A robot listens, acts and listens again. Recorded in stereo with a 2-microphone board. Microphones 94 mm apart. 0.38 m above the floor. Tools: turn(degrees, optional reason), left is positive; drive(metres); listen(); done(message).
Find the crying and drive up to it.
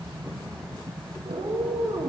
listen()
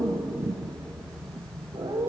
listen()
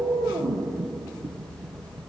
done("I can't make out crying to turn to.")